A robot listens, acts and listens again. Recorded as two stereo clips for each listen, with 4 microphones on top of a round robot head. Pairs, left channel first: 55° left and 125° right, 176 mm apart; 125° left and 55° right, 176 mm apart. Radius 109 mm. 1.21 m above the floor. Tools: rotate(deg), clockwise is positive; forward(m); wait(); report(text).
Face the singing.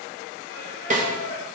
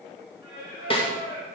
rotate(-90)
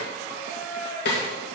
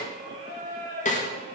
rotate(10)
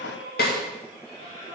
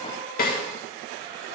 report("Found it: singing, straight ahead, over 4 m away.")